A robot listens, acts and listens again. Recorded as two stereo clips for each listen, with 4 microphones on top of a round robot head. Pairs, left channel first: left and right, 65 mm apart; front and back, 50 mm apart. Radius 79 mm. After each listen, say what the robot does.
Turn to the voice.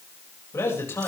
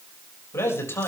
Turn 35° left.
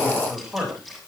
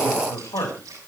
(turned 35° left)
Turn 10° right.
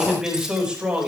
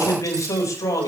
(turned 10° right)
Turn 15° right.
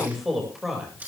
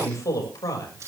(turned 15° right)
Found it: a man speaking, straight ahead, over 4 m away.